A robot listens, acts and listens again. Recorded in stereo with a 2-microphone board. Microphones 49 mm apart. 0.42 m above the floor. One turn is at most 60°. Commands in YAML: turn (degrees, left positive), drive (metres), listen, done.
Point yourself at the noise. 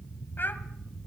turn: 45
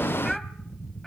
done: "Facing the child speaking."